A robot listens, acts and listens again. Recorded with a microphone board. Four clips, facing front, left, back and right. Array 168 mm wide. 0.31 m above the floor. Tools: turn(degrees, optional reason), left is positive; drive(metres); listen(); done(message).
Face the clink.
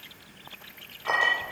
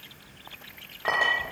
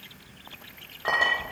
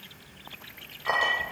turn(degrees=130, reason="The clink: 130° left.")
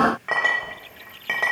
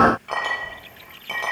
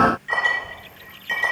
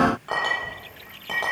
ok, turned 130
turn(degrees=-20, reason="The clink is now 20° right.")
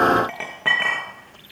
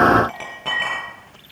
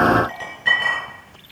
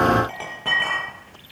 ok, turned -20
done("Found it: a clink, straight ahead.")